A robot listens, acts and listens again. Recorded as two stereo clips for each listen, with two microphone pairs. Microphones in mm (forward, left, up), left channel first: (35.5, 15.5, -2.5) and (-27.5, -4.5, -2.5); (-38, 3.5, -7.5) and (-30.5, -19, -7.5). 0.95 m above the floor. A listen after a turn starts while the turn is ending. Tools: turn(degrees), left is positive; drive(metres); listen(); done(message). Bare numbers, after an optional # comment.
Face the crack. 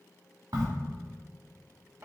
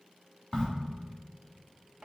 # The crack: straight behind.
turn(180)
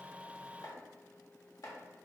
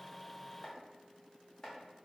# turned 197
# Nothing new. It was at 15° right.
turn(-15)
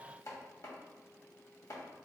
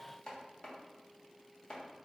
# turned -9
# Nothing new. It was at 10° right.
turn(-10)
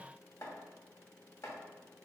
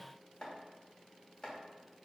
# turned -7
done("Facing where the crack came from. I can't hear it now.")